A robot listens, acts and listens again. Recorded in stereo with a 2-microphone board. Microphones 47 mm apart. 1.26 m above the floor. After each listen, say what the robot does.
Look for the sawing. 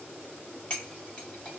Keep listening.
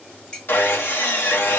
Turn 50° left.
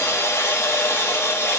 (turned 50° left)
Turn 80° left.
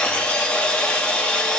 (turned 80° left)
Turn 25° left.
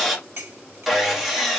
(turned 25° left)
Facing the sawing.